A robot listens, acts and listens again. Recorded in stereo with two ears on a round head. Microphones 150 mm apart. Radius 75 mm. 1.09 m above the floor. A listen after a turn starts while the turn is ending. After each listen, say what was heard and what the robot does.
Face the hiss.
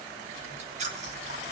Keep listening.
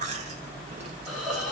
Turn 30° left.
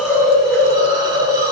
So it is at 30° right. Turn 30° right.
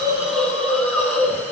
The hiss is now 10° left. Turn 10° left.
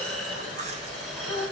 Facing the hiss.